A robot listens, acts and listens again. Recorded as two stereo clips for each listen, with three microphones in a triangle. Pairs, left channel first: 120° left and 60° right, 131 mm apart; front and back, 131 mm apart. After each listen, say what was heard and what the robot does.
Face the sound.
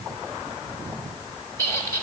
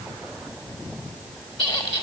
The squeak: 50° left. Turn 50° left.
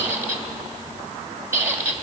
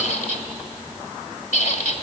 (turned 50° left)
The squeak is now 15° left. Turn 15° left.
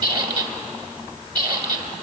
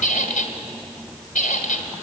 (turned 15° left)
Found it: a squeak, straight ahead, 1 to 2 m away.